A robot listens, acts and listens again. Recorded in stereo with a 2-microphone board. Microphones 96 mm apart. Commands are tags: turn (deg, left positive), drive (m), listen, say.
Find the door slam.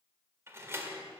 <turn deg="-25"/>
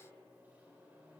<listen/>
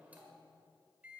<say>I heard a door slam, but can't make it out now. It was about straight ahead or 130° right.</say>